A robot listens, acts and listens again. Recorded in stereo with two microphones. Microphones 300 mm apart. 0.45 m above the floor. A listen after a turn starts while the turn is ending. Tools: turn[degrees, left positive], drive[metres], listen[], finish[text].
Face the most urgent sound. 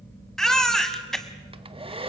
Action: turn[30]
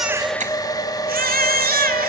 Thought: So it is at 30° right.
Action: turn[-30]
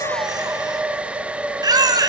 Thought: The baby crying is now 15° right.
Action: turn[-15]
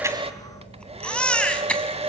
Action: finish[Facing the baby crying.]